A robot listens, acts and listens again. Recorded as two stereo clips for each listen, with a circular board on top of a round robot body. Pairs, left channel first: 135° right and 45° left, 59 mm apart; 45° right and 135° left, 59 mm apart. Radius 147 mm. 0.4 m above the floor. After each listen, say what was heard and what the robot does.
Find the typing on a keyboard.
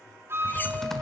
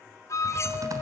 The typing on a keyboard: 140° left. Turn 140° left.
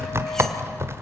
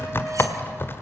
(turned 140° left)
Found it: typing on a keyboard, straight ahead, 1 to 2 m away.